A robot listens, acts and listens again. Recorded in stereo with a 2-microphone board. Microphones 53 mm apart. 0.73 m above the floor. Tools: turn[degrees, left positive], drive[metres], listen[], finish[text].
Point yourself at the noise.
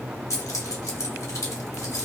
Action: turn[90]
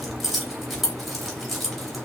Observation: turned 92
Action: finish[Found it: keys jangling, straight ahead.]